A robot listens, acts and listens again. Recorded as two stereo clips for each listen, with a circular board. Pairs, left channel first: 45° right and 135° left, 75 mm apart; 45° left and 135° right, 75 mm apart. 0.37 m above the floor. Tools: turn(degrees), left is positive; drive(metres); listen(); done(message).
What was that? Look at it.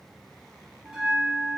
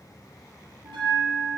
turn(degrees=-145)
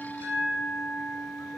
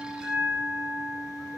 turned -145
turn(degrees=-45)
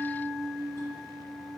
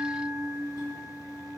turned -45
done("Found it: a bell, straight ahead, 1 to 2 m away.")